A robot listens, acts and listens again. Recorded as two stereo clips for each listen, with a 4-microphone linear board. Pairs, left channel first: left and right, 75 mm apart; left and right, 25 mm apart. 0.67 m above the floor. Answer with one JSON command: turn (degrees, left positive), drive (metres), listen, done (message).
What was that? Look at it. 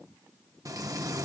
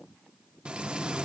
{"turn": -50}
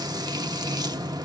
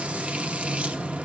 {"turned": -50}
{"turn": -75}
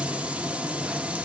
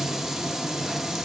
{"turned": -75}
{"turn": -20}
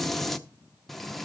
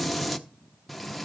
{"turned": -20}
{"done": "Found it: frying, straight ahead."}